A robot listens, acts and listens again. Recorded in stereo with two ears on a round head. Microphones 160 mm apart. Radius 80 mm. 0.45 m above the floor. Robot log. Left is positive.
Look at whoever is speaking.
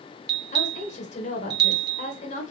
note: The woman speaking: about 40° left or 140° left.
cmd yaw +40
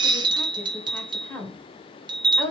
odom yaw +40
note: So it is at 10° left.
cmd yaw +10
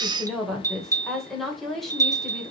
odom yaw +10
end: Facing the woman speaking, 1 to 2 m away.